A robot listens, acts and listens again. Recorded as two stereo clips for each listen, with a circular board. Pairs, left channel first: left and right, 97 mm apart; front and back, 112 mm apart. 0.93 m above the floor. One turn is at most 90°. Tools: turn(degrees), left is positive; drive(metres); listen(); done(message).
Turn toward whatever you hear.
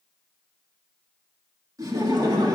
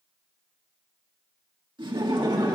turn(degrees=-90)
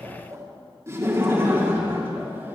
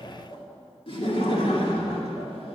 turn(degrees=-25)
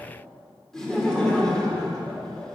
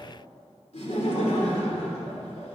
done("Found it: laughter, straight ahead, 2 to 4 m away.")